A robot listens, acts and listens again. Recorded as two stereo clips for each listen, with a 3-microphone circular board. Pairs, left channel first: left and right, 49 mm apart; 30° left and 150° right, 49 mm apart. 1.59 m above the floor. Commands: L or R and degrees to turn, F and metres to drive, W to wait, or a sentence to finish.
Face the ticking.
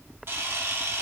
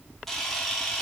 W
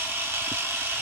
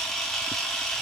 W
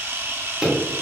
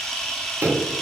R170
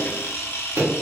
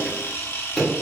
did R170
R55
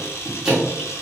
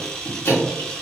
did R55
R10
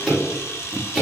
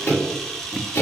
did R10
Found it: ticking, straight ahead, 1 to 2 m away.